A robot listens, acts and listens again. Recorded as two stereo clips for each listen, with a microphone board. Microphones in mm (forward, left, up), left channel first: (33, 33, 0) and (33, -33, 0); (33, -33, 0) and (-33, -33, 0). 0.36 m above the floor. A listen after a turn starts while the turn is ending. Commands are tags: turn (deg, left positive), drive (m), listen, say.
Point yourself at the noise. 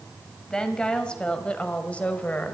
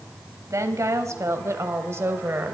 <turn deg="145"/>
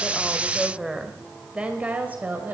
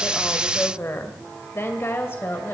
<turn deg="-40"/>
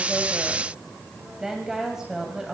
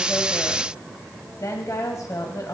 <turn deg="-10"/>
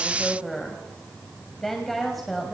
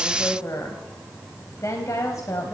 <say>Facing the woman speaking.</say>